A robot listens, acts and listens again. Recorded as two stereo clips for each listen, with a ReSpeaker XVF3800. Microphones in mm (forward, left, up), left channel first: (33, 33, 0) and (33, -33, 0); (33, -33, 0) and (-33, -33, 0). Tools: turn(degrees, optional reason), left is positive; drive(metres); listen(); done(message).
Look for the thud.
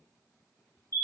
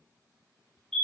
listen()
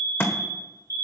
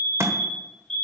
turn(degrees=140, reason="The thud: 140° left.")
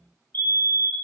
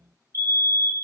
done("I heard a thud from this way, but can't make it out now.")